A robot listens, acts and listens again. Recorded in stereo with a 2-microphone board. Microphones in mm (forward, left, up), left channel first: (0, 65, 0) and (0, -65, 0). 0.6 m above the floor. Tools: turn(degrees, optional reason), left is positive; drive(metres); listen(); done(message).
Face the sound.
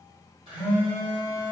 turn(degrees=-50, reason="The phone buzzing: about 50° right or 130° right.")
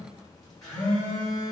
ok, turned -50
done("Facing the phone buzzing.")